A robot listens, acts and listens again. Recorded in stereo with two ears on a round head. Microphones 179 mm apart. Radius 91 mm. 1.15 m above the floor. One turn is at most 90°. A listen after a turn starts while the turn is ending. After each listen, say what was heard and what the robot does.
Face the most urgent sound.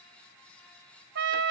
Keep listening.
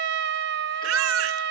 Turn 90° right.
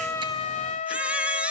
Found it: a baby crying, straight ahead, under 1 m away.